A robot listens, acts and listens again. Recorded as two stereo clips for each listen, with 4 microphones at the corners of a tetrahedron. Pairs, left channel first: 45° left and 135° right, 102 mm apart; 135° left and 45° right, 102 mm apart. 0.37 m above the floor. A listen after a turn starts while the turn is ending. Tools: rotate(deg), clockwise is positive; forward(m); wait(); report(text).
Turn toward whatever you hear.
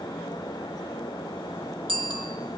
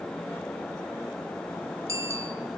rotate(105)
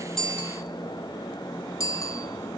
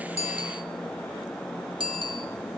rotate(10)
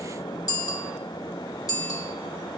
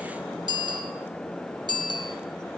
report("Facing the bicycle bell, over 4 m away.")